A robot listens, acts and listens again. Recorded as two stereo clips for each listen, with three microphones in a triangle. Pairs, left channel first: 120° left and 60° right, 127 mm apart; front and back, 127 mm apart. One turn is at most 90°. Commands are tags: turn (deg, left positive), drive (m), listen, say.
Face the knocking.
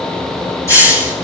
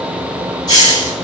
<listen/>
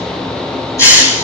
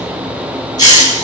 <listen/>
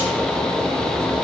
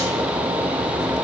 <say>I can't make out knocking, only a hiss.</say>